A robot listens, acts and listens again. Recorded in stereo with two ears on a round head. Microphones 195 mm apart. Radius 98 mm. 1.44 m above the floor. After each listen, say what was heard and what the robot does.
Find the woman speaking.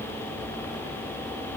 Keep listening.
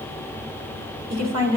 Turn 90° right.
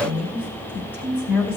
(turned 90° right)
So it is at 10° left. Turn 10° left.
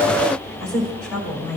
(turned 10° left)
Found it: a woman speaking, straight ahead, over 4 m away.